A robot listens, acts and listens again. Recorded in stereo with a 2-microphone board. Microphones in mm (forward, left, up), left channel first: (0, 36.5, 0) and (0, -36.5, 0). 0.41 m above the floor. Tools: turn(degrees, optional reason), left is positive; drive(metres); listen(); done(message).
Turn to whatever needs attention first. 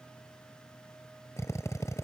listen()
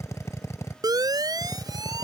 turn(degrees=-60, reason="The siren: about 60° right or 120° right.")
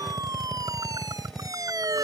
turn(degrees=-55, reason="So it is at 55° right.")
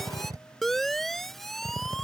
done("Found it: a siren, straight ahead.")